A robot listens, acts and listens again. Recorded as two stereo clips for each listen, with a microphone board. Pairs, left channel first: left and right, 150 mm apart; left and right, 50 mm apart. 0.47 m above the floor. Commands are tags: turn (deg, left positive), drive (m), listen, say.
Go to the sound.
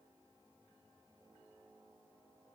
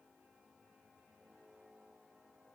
<listen/>
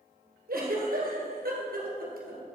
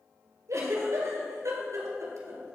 <turn deg="-90"/>
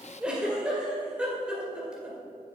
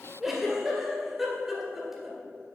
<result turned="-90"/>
<drive m="1.0"/>
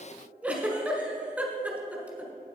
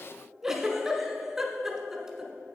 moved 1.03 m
<turn deg="-10"/>
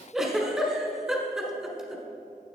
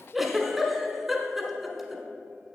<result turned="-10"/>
<drive m="1.0"/>
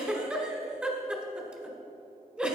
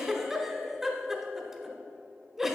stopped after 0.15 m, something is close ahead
<say>I am next to the giggle.</say>